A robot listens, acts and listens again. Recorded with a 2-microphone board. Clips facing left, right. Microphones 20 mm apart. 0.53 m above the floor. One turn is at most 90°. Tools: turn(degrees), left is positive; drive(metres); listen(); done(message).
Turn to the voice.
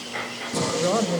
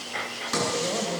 turn(degrees=50)
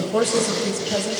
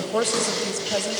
turn(degrees=-10)
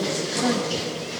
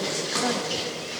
done("Facing the woman speaking.")